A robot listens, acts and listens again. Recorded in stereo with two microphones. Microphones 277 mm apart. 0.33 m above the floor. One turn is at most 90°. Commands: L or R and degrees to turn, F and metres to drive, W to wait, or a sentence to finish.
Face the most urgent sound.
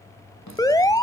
L30
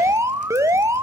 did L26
R10
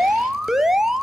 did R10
Facing the alarm.